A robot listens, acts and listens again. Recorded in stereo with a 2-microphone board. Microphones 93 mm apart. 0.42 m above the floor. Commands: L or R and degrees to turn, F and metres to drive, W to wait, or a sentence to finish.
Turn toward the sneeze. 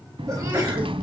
R40
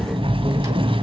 W
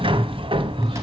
I heard a sneeze, but can't make it out now. It was about straight ahead or 100° right.